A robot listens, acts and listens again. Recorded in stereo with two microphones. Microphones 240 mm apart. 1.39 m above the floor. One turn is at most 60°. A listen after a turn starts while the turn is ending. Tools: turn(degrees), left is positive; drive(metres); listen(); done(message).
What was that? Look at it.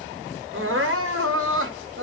turn(degrees=-60)
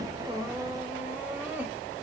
listen()
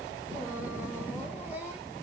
listen()
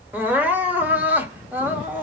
turn(degrees=-10)
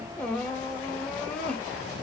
done("Found it: crying, straight ahead.")